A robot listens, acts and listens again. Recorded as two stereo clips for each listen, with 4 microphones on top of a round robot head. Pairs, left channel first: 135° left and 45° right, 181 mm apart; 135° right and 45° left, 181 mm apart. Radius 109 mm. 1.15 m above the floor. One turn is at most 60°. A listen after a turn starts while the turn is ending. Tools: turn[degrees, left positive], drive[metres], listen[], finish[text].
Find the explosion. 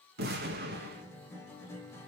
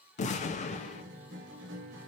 Thought: The explosion: 85° right.
Action: turn[-60]
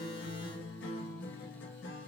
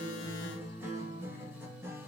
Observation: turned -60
Thought: Nothing new. It was at 25° right.
Action: turn[-25]
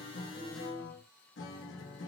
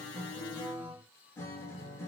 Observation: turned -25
Action: finish[Facing where the explosion came from. I can't hear it now.]